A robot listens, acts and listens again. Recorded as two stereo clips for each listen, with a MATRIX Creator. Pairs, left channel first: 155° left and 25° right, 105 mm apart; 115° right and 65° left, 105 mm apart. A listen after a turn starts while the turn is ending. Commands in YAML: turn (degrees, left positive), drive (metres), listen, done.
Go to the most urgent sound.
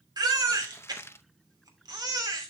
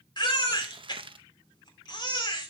turn: -70
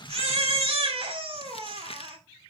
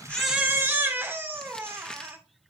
drive: 1.0
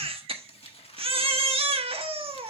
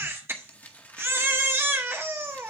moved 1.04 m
drive: 1.0
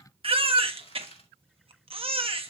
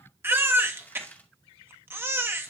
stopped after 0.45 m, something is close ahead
done: "I am next to the baby crying."